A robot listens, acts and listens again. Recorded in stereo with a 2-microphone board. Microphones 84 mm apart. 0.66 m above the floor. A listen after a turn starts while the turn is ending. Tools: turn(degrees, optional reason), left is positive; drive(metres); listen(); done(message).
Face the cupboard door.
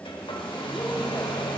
listen()
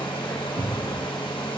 turn(degrees=-90)
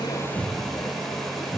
done("Facing the cupboard door, 1 to 2 m away.")